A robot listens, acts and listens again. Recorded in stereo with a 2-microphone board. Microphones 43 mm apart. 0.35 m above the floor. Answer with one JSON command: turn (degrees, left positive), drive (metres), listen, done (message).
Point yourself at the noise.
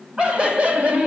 {"turn": -35}
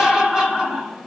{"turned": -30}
{"turn": -20}
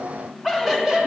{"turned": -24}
{"turn": -15}
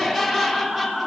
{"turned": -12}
{"turn": -10}
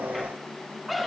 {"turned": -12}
{"done": "Found it: laughter, straight ahead."}